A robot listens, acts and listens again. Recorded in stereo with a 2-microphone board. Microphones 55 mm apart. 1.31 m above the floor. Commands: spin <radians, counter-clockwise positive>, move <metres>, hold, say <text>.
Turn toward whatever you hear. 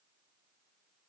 hold
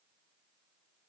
hold
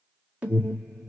spin -0.44
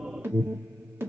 spin -2.27
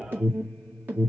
spin -0.61
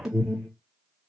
say Found it: an alarm, straight ahead.